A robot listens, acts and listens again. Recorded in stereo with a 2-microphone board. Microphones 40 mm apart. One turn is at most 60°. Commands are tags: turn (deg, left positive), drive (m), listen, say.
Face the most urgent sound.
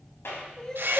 <turn deg="15"/>
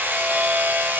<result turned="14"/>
<listen/>
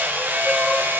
<listen/>
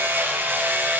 <say>I heard crying, but can't make it out now. It was about 5° left or 150° left.</say>